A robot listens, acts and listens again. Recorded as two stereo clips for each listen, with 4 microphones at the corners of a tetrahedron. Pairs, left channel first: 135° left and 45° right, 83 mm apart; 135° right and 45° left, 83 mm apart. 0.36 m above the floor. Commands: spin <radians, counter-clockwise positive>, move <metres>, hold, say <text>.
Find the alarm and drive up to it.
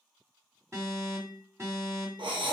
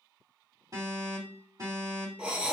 move 1.0
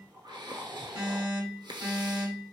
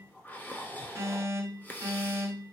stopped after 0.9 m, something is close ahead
say I am next to the alarm.